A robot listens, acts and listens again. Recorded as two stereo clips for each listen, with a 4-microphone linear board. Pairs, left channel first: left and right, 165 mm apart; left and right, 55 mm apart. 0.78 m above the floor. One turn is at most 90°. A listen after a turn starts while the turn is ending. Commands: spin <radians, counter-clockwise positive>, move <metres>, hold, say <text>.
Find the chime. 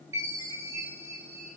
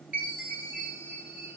spin -0.35
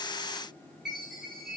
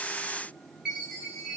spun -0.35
say Facing the chime, over 4 m away.